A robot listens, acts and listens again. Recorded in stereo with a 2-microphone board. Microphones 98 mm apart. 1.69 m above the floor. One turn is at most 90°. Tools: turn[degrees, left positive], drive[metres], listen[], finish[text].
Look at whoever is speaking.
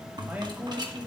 Thought: The man speaking: about 15° right or 165° right.
Action: turn[-15]
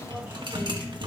Action: listen[]
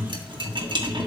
Action: listen[]
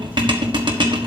Action: finish[I heard a man speaking, but can't make it out now. It was about straight ahead or 150° right.]